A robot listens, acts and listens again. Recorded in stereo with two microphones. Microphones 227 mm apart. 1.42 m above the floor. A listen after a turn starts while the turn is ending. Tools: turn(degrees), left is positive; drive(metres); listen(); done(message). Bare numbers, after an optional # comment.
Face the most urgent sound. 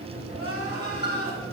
# The crying: about 70° left or 110° left.
turn(70)
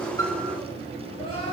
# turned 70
listen()
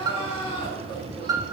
# So it is at 25° left.
turn(25)
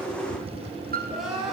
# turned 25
done("Found it: crying, straight ahead.")